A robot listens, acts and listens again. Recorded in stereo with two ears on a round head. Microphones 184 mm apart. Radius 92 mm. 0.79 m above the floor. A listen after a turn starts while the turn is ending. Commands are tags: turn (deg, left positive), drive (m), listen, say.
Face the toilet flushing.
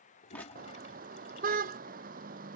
<turn deg="35"/>
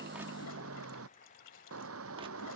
<turn deg="110"/>
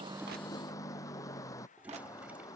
<listen/>
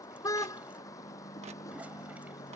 <listen/>
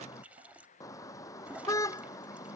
<turn deg="-10"/>
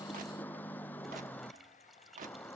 <say>Found it: a toilet flushing, straight ahead.</say>